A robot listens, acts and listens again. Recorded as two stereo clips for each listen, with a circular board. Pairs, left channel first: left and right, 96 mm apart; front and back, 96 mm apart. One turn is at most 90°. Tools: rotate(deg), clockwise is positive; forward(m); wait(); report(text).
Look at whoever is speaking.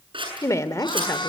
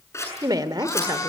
rotate(-90)
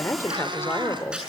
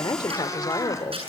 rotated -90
rotate(-35)
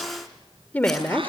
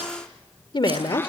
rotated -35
rotate(-20)
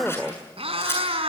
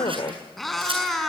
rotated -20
report("Found it: a woman speaking, straight ahead.")